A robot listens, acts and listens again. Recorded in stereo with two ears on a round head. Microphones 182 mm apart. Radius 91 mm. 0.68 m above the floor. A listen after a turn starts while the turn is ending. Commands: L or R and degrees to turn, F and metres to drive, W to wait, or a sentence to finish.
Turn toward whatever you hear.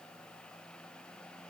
W
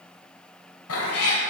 L90
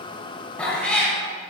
Found it: a cat meowing, straight ahead, 1 to 2 m away.